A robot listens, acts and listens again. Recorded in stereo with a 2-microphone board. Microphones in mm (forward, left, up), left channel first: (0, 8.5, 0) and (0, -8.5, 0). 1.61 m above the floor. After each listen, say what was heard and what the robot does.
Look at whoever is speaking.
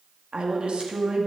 The woman speaking: about 75° right or 105° right. Turn 75° right.
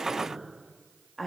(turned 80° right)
Found it: a woman speaking, straight ahead.